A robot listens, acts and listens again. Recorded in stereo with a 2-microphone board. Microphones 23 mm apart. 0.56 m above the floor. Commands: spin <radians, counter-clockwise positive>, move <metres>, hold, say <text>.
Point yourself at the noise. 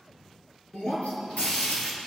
spin 1.31
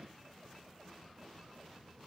hold
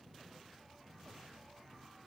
say I heard breaking glass, but can't make it out now. It was about straight ahead or 30° left.